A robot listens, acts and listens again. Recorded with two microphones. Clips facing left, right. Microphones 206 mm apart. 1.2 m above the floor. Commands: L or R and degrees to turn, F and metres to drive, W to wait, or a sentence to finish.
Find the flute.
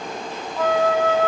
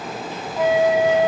R15
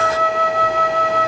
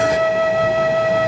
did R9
R25
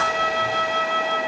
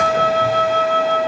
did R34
R120
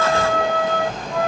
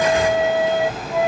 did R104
R20
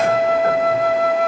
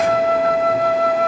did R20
Found it: a flute, straight ahead.